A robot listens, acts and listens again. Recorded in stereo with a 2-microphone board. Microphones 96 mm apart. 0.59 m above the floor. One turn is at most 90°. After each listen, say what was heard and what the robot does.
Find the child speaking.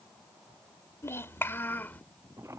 The child speaking: about 20° left or 160° left. Turn 20° left.
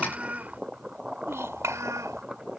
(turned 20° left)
So it is at 35° right. Turn 35° right.
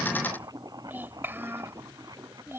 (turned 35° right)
The child speaking is now 25° right. Turn 25° right.
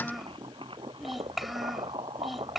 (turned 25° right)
Facing the child speaking.